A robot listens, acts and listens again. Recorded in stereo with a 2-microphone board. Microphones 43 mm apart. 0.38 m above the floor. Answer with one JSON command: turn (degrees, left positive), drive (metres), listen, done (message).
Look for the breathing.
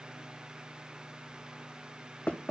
{"listen": true}
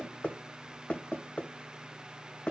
{"listen": true}
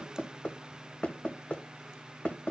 {"done": "I can't make out breathing to turn to."}